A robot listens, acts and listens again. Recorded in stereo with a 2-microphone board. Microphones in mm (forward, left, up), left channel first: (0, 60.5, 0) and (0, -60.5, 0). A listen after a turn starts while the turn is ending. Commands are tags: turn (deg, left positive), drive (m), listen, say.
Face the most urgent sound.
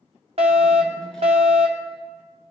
<turn deg="-60"/>
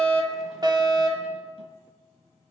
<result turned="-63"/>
<turn deg="-40"/>
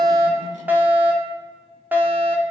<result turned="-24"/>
<turn deg="-15"/>
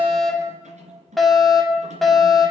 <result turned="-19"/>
<say>Facing the fire alarm, 2 to 4 m away.</say>